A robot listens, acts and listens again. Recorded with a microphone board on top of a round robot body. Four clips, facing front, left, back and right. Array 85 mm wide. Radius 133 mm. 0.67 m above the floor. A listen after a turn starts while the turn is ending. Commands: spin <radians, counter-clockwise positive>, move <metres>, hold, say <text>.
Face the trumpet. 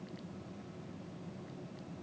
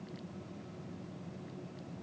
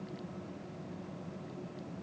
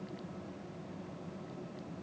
hold
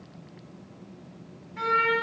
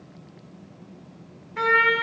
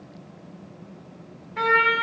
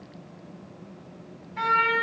spin 2.27
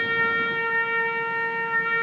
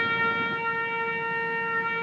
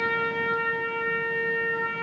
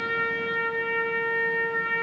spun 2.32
say Found it: a trumpet, straight ahead, 2 to 4 m away.